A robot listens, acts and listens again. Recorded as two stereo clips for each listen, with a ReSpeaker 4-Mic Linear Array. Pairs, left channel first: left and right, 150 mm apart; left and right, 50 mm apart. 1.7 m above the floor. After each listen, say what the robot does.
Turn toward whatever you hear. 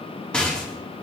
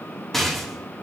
Turn 30° left.
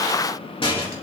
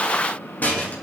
Turn 145° left.
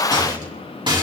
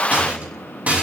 Turn 30° right.
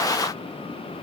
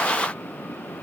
Keep listening.
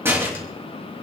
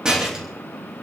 Turn 15° right.
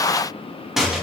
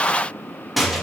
Found it: a rattle, straight ahead, 2 to 4 m away.